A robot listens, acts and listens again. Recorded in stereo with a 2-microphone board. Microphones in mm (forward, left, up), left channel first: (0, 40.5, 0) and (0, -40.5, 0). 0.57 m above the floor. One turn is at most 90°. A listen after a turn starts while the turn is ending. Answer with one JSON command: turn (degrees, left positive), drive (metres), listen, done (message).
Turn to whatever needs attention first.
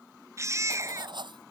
{"turn": -40}
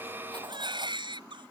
{"turn": -90}
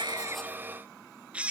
{"turn": -15}
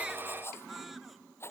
{"listen": true}
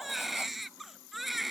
{"done": "Found it: a baby crying, straight ahead."}